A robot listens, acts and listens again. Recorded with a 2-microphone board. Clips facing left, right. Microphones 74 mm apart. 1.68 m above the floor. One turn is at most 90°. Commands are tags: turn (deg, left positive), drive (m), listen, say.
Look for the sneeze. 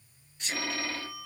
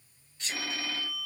<turn deg="25"/>
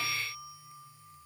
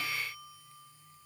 <listen/>
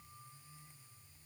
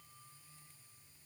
<say>I heard a sneeze, but can't make it out now. It was about straight ahead or 130° left.</say>